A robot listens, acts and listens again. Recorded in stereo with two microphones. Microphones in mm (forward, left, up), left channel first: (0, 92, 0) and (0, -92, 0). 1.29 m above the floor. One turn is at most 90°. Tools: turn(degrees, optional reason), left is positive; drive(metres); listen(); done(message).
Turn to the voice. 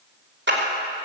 listen()
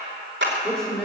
turn(degrees=30)
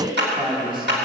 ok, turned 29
turn(degrees=-25, reason="So it is at 25° right.")
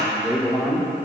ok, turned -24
done("Found it: a man speaking, straight ahead.")